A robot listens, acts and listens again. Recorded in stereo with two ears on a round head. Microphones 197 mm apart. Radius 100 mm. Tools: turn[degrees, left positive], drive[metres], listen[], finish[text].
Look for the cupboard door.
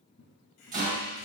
Thought: The cupboard door: about 25° left or 155° left.
Action: turn[25]
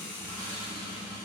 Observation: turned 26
Action: listen[]
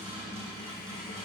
Action: listen[]
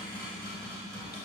Action: finish[Facing the cupboard door, 2 to 4 m away.]